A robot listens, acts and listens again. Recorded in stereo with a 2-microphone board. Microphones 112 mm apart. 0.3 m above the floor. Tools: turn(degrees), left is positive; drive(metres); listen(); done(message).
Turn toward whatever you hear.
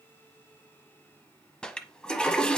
turn(degrees=30)
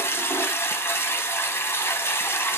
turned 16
turn(degrees=155)
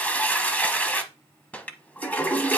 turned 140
turn(degrees=15)
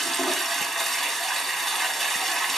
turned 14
done("Facing the toilet flushing.")